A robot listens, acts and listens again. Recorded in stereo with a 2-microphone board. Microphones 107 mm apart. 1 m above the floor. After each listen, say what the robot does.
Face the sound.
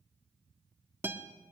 Turn 20° right.
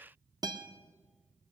Turn 140° right.
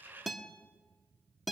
Facing the guitar, 1 to 2 m away.